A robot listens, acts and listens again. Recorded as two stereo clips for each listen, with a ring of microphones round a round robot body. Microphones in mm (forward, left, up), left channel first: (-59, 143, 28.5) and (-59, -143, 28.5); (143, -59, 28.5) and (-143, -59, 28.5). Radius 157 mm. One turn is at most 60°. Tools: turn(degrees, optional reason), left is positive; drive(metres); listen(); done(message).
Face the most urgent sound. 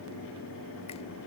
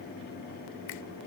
listen()
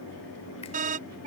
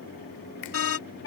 turn(degrees=-30, reason="The alarm: 30° right.")
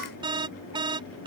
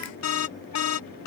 turn(degrees=-15, reason="The alarm is now 15° right.")
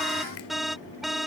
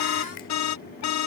done("Facing the alarm.")